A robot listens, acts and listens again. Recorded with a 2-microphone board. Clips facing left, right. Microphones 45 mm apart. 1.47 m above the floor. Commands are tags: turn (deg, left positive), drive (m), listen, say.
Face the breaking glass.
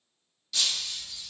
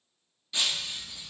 <turn deg="-20"/>
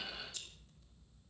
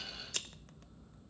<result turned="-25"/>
<listen/>
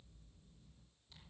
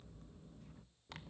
<say>I heard breaking glass, but can't make it out now. It was about 5° left or 135° right.</say>